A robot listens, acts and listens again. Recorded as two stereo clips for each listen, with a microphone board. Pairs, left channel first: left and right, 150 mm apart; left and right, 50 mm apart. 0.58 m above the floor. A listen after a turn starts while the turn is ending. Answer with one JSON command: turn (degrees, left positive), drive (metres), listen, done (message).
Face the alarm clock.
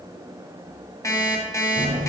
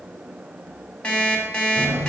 {"turn": 20}
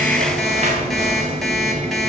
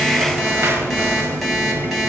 {"listen": true}
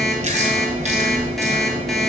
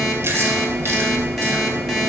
{"listen": true}
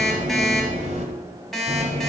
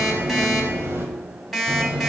{"done": "Facing the alarm clock."}